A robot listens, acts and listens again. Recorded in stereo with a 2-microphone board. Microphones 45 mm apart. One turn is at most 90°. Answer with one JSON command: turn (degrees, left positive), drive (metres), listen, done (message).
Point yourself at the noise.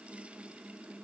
{"listen": true}
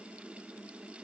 {"listen": true}
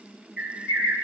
{"turn": -25}
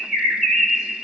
{"done": "Found it: a bird, straight ahead."}